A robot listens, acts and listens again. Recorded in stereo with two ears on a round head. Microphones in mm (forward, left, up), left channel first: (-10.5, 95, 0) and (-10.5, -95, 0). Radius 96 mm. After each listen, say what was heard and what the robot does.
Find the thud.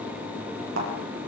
The thud: about 65° right or 115° right. Turn 65° right.
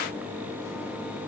Keep listening.
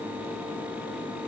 I heard a thud, but can't make it out now. It was about straight ahead or 50° right.